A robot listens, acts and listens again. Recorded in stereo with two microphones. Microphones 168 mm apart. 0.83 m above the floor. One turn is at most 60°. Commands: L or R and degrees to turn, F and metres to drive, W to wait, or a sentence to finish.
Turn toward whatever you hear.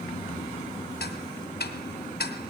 L60
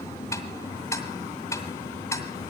L15
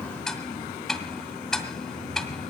Facing the ticking, 2 to 4 m away.